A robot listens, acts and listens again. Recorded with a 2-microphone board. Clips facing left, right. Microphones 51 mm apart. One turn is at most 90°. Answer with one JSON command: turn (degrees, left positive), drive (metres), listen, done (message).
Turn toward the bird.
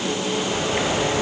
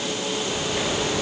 {"turn": 35}
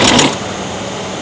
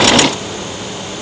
{"turn": 90}
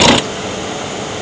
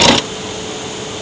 {"turn": 55}
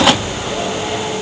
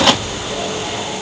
{"turn": 15}
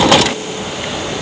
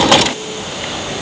{"done": "Facing the bird."}